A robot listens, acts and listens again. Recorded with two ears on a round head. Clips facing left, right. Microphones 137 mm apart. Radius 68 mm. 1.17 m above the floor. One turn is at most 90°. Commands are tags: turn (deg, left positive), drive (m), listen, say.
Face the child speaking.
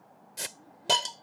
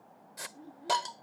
<turn deg="-35"/>
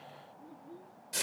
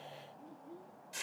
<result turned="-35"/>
<say>Facing the child speaking.</say>